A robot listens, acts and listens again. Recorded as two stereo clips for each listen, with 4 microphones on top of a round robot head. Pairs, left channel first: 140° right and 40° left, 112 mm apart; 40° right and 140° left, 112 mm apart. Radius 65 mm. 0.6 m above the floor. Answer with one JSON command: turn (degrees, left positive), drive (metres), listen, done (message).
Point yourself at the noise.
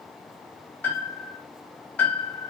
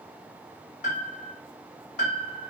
{"turn": -60}
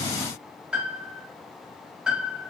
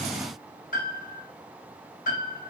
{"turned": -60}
{"turn": -40}
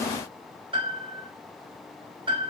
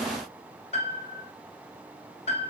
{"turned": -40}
{"done": "Found it: a piano, straight ahead."}